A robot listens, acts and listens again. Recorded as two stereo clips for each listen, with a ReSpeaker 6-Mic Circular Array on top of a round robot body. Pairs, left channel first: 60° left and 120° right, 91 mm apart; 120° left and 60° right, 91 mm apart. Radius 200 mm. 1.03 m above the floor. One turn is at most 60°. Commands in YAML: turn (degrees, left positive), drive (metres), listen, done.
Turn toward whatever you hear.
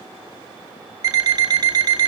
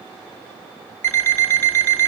turn: -60
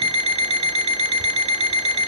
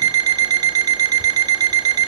turn: -60
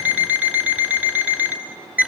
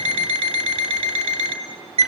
turn: -45
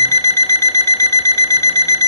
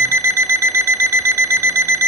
done: "Facing the alarm clock."